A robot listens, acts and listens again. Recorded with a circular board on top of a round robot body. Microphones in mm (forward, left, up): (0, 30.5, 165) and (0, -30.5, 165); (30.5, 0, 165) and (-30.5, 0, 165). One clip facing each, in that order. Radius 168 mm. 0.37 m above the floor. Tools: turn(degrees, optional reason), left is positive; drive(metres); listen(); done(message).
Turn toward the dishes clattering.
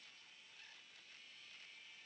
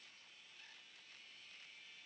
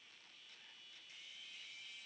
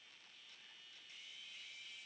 listen()
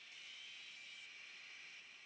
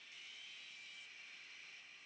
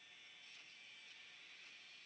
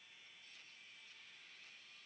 listen()
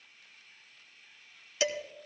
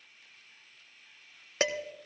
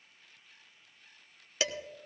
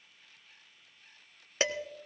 turn(degrees=-125, reason="The dishes clattering: 125° right.")
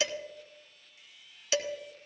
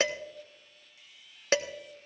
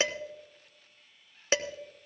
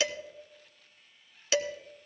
turn(degrees=-55, reason="The dishes clattering is now 55° right.")
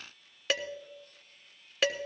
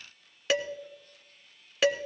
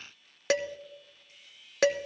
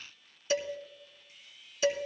done("Facing the dishes clattering, 1 to 2 m away.")